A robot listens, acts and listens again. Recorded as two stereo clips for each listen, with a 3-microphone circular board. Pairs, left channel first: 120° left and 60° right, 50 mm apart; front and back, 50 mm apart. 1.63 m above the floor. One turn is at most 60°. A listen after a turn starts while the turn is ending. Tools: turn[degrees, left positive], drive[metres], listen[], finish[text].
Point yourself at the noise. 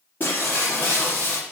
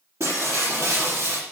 Thought: The breaking glass: 165° left.
Action: turn[60]
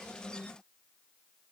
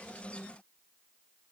Thought: Nothing new. It was at 105° left.
Action: turn[60]
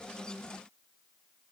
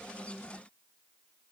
Thought: Nothing new. It was at 45° left.
Action: turn[45]
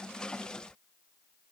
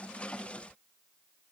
Action: finish[I heard breaking glass from this way, but can't make it out now.]